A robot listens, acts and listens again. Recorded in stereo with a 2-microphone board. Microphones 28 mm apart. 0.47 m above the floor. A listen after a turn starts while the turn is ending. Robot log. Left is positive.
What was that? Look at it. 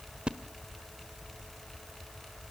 note: The splash: about 35° right or 145° right.
cmd yaw -35
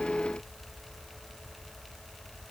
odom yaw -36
cmd idle
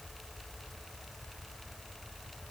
end: I heard a splash, but can't make it out now. It was about straight ahead or 110° right.